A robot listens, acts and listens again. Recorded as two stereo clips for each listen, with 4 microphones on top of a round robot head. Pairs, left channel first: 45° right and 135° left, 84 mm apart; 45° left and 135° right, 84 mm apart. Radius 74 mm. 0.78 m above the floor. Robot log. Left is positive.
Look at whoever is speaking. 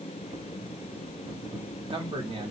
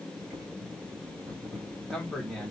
note: The man speaking: 130° left.
cmd yaw +130
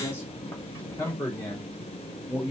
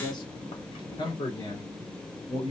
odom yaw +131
note: The man speaking is now 20° left.
cmd yaw +20
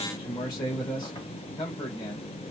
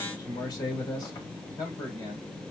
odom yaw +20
end: Facing the man speaking.